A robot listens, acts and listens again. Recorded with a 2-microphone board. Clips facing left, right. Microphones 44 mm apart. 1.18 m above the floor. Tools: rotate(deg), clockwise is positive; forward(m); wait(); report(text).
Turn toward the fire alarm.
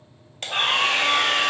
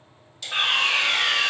rotate(30)
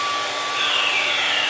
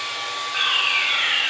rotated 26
rotate(140)
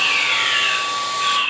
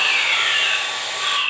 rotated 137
report("Facing the fire alarm.")